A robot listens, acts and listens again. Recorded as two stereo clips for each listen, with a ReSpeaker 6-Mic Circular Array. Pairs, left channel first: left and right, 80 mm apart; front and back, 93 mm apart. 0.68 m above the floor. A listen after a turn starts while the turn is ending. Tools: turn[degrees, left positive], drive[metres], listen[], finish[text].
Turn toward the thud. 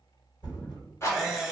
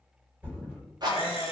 Thought: The thud: 110° left.
Action: turn[110]
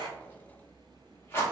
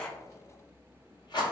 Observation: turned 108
Action: finish[Facing where the thud came from. I can't hear it now.]